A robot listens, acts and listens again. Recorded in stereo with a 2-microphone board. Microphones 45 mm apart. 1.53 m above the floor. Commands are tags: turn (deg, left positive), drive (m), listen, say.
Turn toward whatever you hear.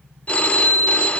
<turn deg="35"/>
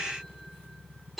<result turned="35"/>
<say>Facing the phone ringing, 1 to 2 m away.</say>